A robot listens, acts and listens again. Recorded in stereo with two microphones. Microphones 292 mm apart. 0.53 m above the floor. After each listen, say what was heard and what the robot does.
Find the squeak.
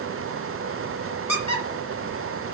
The squeak: about 70° left or 110° left. Turn 70° left.
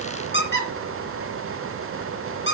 So it is at 40° left. Turn 40° left.
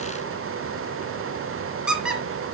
Found it: a squeak, straight ahead.